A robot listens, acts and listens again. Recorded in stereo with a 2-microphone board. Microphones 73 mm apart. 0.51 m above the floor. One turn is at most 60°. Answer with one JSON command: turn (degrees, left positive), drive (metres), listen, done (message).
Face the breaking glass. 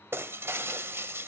{"turn": -35}
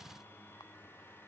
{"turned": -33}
{"listen": true}
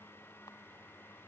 {"done": "I heard breaking glass, but can't make it out now. It was about straight ahead or 110° right."}